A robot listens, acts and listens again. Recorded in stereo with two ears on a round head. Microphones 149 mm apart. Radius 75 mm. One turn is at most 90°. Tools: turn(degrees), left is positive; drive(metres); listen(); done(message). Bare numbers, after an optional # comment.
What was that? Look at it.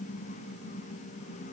listen()
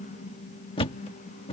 # The thud: about 35° left or 145° left.
turn(35)
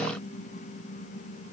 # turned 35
listen()
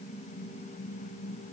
done("I heard a thud, but can't make it out now. It was about straight ahead or 110° left.")